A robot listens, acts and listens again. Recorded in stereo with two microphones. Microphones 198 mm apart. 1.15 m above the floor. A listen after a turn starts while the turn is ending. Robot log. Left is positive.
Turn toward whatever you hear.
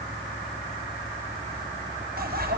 note: The bicycle bell: about 50° right or 130° right.
cmd yaw -50
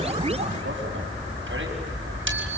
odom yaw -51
note: So it is at 80° right.
cmd yaw -80
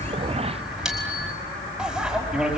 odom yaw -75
end: Found it: a bicycle bell, straight ahead, over 4 m away.